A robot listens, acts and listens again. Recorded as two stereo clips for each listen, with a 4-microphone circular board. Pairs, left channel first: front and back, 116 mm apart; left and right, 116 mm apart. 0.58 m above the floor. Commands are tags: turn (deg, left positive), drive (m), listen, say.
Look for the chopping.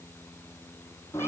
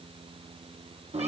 <listen/>
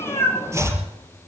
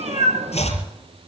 <turn deg="115"/>
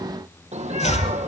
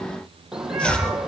<turn deg="10"/>
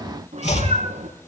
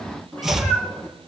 <say>Facing the chopping, over 4 m away.</say>